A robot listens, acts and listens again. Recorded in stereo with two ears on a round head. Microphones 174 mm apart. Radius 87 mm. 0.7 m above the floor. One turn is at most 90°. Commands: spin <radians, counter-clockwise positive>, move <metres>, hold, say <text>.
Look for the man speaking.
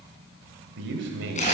spin -1.13
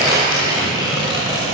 hold
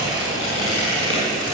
hold
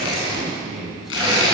say Found it: a man speaking, straight ahead.